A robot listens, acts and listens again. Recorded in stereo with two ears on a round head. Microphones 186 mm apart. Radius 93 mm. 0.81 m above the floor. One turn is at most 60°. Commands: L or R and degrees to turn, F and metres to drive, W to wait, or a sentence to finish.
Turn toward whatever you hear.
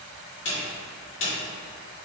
L60
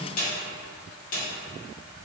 L45
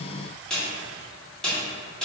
Facing the snare drum, 1 to 2 m away.